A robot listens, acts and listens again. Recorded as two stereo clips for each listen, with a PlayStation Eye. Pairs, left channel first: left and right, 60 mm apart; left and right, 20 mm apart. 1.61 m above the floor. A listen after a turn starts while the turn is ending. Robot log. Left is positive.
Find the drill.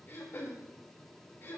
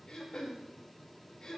cmd idle
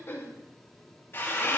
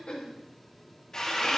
note: The drill: about 40° left or 140° left.
cmd yaw +40
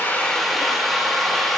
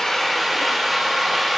end: Facing the drill, 2 to 4 m away.